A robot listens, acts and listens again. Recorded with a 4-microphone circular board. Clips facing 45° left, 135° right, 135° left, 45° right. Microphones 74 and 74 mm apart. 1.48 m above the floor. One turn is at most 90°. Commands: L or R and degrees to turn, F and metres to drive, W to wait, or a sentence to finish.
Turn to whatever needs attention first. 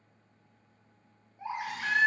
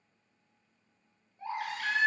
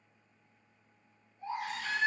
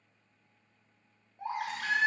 R30
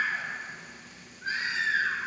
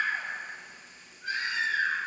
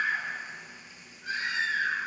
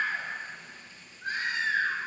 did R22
Facing the baby crying.